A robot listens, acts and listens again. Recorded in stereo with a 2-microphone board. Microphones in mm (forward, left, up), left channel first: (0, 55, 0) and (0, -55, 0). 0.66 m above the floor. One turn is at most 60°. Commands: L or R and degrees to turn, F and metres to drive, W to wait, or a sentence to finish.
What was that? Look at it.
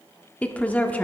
L30
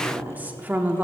R15
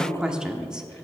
R10
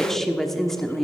Found it: a woman speaking, straight ahead.